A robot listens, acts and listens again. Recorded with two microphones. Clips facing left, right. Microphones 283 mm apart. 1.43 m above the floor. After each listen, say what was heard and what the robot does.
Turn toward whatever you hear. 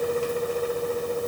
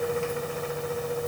Keep listening.
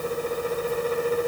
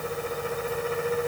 Keep listening.
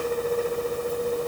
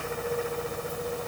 I can't make out anything.